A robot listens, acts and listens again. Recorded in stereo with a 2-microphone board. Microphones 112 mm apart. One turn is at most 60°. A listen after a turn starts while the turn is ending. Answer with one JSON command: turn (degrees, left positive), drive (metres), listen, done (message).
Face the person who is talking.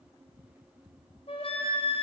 {"listen": true}
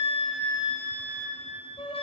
{"listen": true}
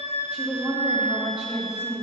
{"turn": 30}
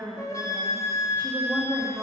{"turn": -20}
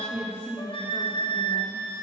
{"turn": 10}
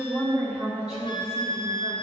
{"done": "Found it: a woman speaking, straight ahead."}